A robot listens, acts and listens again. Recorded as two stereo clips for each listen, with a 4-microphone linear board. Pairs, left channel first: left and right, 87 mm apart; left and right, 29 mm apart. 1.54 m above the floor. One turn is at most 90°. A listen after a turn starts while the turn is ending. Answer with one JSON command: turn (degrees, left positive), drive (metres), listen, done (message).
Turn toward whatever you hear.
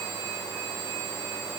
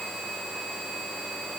{"listen": true}
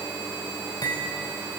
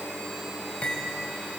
{"turn": 50}
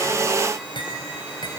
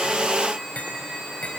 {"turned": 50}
{"turn": 80}
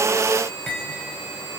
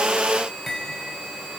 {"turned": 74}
{"done": "Facing the cutlery clinking."}